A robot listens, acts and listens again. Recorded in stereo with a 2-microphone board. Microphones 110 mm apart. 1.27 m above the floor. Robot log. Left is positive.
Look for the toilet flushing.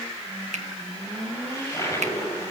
note: The toilet flushing: about 25° left or 155° left.
cmd yaw +25
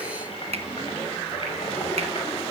note: So it is at 125° left.
cmd yaw +125
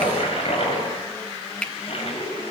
note: The toilet flushing is now 55° left.
cmd yaw +55
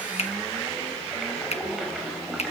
end: Found it: a toilet flushing, straight ahead.